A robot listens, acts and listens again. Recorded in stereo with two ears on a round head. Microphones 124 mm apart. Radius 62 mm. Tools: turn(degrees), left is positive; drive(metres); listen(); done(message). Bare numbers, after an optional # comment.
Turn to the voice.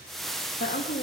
# The woman speaking: about 60° left or 120° left.
turn(60)
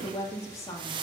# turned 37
# So it is at 20° left.
turn(20)
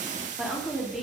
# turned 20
done("Facing the woman speaking, 2 to 4 m away.")